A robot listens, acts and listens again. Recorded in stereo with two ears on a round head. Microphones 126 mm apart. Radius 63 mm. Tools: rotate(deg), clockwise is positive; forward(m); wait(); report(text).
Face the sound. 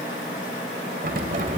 rotate(55)
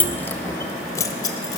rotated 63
rotate(-25)
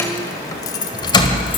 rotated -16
rotate(-35)
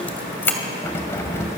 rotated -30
rotate(-20)
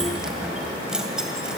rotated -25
report("Facing the keys jangling.")